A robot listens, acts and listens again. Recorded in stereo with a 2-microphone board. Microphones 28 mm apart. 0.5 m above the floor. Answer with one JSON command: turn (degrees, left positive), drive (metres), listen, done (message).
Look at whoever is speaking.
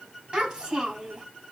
{"turn": -35}
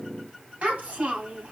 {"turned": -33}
{"turn": -105}
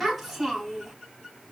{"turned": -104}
{"done": "Facing the child speaking."}